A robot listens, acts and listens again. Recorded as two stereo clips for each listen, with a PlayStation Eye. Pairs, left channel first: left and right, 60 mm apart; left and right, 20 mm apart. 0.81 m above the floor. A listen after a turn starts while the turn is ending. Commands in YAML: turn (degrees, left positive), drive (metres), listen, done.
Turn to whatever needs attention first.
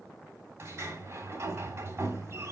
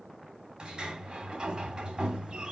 listen: true
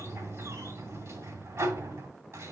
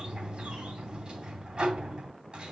listen: true
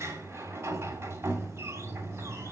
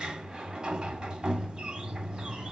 done: "I can't make out anything urgent to turn to."